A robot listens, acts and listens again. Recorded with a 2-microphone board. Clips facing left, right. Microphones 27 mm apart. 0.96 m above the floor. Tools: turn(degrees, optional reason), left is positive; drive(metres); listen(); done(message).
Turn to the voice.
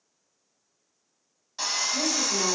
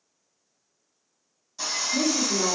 turn(degrees=-30, reason="The woman speaking: about 30° right or 150° right.")
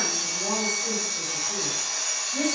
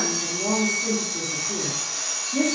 turn(degrees=-110, reason="So it is at 110° right.")
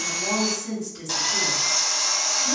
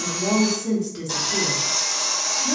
turn(degrees=-30, reason="The woman speaking is now 30° right.")
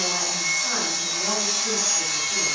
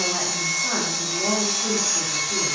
turn(degrees=-30, reason="The woman speaking is now 30° right.")
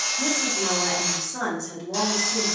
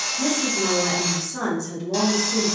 turn(degrees=10, reason="The woman speaking is now 10° left.")
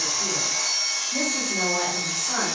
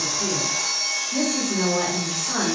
done("Facing the woman speaking, 1 to 2 m away.")